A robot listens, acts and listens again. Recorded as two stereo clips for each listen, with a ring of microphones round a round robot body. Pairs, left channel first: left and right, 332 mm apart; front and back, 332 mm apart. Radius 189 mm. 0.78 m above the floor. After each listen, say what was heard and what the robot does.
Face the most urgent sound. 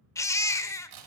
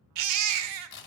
The baby crying: 170° left. Turn 170° left.
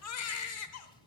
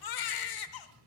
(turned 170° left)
The baby crying is now 35° left. Turn 35° left.
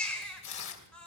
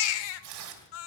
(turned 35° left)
Facing the baby crying, under 1 m away.